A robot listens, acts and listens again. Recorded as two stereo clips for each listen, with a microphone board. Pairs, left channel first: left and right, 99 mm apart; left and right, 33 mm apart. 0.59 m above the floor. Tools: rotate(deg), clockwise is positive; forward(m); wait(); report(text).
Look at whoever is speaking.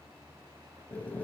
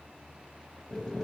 wait()
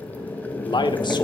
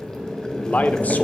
rotate(-50)
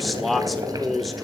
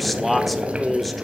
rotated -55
report("Facing the man speaking.")